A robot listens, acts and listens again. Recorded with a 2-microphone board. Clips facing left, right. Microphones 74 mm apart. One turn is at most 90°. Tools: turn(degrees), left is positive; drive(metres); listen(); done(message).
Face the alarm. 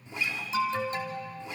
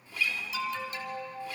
turn(degrees=30)
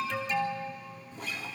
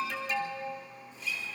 done("Facing the alarm, 2 to 4 m away.")